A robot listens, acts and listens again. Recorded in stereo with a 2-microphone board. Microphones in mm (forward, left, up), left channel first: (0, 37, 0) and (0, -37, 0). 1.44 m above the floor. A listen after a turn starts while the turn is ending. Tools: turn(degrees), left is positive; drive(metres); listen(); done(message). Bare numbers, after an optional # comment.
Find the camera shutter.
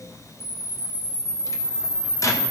turn(90)
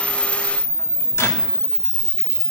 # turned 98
# So it is at 10° right.
turn(-10)
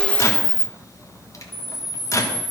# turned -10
done("Facing the camera shutter.")